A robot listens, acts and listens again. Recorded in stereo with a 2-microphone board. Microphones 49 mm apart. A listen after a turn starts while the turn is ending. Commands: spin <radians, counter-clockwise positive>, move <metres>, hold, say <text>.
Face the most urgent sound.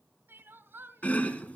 spin -0.79
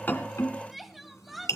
say Facing the crying.